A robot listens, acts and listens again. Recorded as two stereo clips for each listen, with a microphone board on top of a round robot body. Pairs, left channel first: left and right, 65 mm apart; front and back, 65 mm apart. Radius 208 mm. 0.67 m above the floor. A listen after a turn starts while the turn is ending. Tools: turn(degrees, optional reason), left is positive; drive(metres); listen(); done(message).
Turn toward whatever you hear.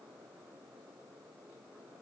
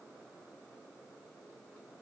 listen()
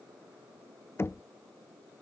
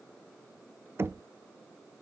turn(degrees=135, reason="The knocking: 135° left.")
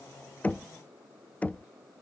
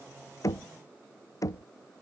turn(degrees=25, reason="The knocking is now 25° left.")
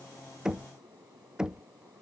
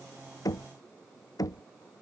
turn(degrees=-10, reason="The knocking is now 10° right.")
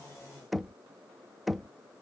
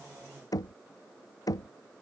done("Facing the knocking.")